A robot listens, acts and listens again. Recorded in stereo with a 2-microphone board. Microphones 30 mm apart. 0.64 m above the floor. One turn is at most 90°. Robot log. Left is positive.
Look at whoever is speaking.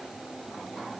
cmd idle
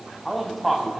cmd yaw +30
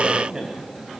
note: So it is at 30° right.
cmd yaw -30
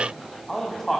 note: The man speaking is now 10° left.
cmd yaw +10
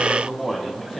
end: Facing the man speaking.